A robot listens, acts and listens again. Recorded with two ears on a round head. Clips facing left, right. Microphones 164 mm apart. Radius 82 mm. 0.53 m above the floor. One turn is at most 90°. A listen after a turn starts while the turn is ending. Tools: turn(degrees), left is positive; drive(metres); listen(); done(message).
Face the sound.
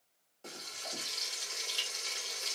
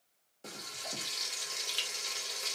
turn(degrees=-15)
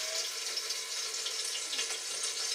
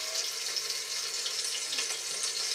turn(degrees=-90)
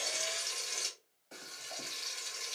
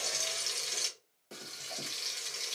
turn(degrees=-80)
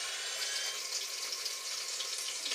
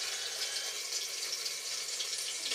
done("Found it: frying, straight ahead.")